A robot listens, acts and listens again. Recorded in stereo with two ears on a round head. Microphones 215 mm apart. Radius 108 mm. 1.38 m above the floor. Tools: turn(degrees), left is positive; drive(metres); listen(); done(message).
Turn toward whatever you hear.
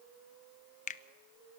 turn(degrees=35)
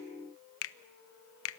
turn(degrees=110)
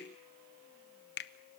turn(degrees=50)
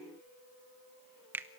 turn(degrees=-10)
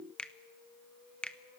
done("Found it: a finger snap, straight ahead.")